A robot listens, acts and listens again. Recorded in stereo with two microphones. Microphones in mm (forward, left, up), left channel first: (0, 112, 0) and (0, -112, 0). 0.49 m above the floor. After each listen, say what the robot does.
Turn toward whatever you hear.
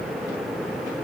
Keep listening.
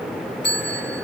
Turn 50° left.
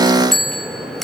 Facing the bell, 1 to 2 m away.